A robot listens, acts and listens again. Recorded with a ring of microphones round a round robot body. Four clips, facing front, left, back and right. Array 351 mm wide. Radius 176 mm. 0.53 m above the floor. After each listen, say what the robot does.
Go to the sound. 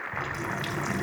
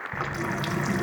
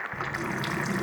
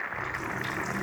Turn 100° left.
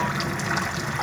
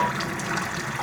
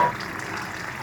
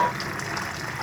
Turn 30° left.
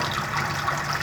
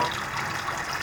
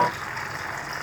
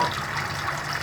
Turn 10° right.
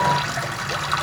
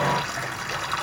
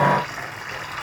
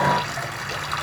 Drive 1.0 m forward.
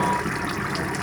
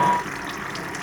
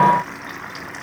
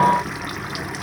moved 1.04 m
Turn 15° right.
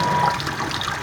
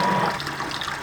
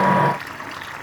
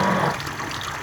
Drive 1.0 m forward.
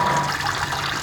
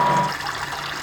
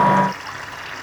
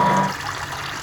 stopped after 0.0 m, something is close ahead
Arrived at the running tap, straight ahead.